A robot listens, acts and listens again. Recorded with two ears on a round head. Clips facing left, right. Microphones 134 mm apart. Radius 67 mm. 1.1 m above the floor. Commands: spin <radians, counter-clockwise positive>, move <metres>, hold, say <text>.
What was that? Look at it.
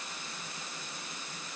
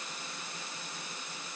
hold
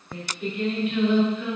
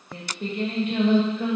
spin -0.61
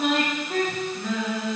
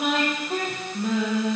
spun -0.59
spin -0.35
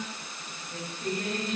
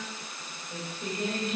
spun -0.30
spin -0.26
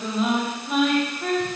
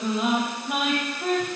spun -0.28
spin -0.17
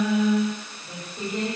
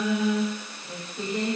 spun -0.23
say Facing the singing.